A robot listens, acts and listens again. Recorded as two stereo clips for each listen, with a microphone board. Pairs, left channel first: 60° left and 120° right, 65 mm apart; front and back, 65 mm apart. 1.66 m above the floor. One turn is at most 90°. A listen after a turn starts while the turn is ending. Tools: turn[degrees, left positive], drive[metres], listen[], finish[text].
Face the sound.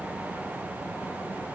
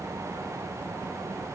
Action: listen[]
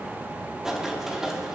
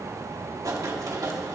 Thought: The writing: 160° left.
Action: turn[90]
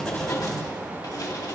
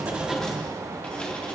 Thought: Nothing new. It was at 70° left.
Action: turn[70]
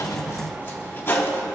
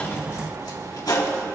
Action: finish[Found it: writing, straight ahead, 2 to 4 m away.]